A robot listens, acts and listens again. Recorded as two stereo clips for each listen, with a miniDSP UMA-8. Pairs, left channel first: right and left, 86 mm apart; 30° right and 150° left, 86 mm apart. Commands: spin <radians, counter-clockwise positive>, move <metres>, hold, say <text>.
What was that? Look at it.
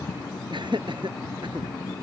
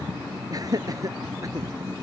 spin 1.83
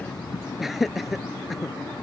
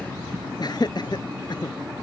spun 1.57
say Facing the laughter.